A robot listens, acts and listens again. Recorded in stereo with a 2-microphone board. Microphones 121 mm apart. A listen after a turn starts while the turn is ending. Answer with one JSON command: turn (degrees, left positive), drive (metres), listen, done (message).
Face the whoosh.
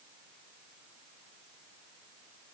{"listen": true}
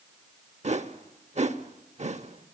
{"turn": -70}
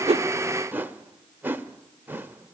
{"turn": -20}
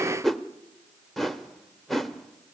{"done": "Facing the whoosh."}